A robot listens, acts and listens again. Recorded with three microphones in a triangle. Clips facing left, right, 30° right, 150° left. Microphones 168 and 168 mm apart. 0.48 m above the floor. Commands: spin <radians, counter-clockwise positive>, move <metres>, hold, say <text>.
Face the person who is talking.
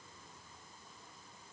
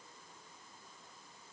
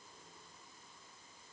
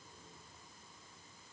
hold
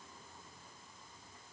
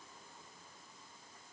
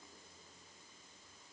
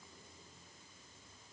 hold
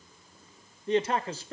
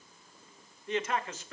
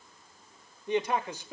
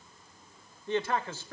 spin 0.70
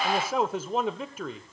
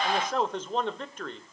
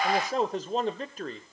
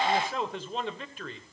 spin 0.17
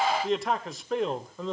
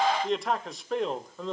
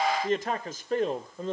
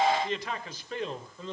say Found it: a man speaking, straight ahead.